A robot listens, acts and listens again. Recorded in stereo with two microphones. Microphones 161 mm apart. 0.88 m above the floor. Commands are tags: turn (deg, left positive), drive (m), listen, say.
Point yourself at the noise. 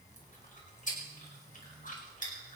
<turn deg="55"/>
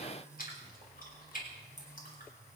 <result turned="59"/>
<turn deg="65"/>
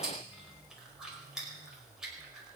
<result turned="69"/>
<say>Found it: chewing, straight ahead, over 4 m away.</say>